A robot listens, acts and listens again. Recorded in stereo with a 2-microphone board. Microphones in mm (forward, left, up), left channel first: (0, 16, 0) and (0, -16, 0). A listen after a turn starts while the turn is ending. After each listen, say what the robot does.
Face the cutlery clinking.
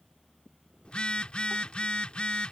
Keep listening.
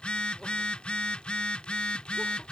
Keep listening.
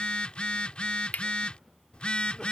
Turn 65° left.
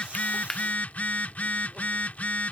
Turn 20° left.
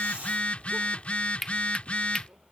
Found it: cutlery clinking, straight ahead.